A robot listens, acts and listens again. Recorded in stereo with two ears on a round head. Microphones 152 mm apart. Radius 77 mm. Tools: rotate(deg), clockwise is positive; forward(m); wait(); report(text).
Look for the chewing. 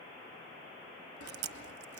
rotate(65)
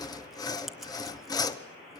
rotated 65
wait()
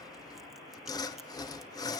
wait()
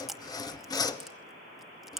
report("Found it: chewing, straight ahead.")